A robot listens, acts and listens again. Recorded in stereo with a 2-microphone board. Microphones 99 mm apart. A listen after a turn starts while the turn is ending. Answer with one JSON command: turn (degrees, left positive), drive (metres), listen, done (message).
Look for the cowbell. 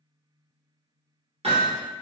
{"listen": true}
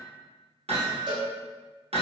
{"turn": -50}
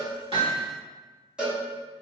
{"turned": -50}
{"turn": -10}
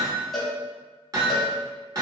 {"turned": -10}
{"done": "Facing the cowbell."}